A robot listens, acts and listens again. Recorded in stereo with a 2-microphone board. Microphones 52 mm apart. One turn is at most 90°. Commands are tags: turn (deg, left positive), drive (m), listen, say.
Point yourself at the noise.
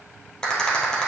<turn deg="30"/>
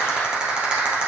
<turn deg="-20"/>
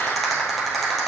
<say>Found it: a rattle, straight ahead.</say>